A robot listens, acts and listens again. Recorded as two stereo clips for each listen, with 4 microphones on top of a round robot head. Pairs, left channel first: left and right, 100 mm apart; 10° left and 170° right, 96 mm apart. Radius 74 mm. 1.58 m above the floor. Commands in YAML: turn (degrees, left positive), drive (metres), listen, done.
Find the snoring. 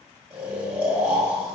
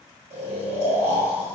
turn: -145
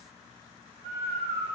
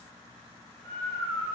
turn: -55
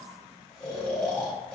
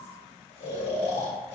turn: 10
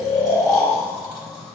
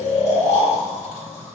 done: "Facing the snoring."